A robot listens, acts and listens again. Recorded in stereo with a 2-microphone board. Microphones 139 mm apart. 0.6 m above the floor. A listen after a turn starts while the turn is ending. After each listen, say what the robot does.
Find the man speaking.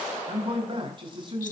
Turn 35° right.
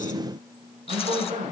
Turn 120° right.
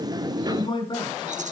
Turn 35° left.
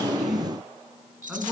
Turn 10° right.
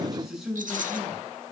Facing the man speaking, over 4 m away.